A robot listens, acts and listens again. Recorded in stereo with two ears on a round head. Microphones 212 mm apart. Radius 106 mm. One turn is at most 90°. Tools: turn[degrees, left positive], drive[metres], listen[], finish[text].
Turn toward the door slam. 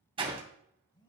Thought: The door slam: about 25° right or 155° right.
Action: turn[-25]
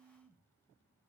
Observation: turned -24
Action: listen[]
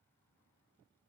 Action: finish[I heard a door slam, but can't make it out now. It was about straight ahead or 135° right.]